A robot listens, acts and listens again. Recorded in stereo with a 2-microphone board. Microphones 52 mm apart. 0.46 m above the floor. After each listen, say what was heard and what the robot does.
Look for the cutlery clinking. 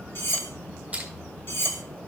The cutlery clinking: about 55° left or 125° left. Turn 55° left.
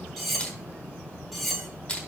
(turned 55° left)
Facing the cutlery clinking.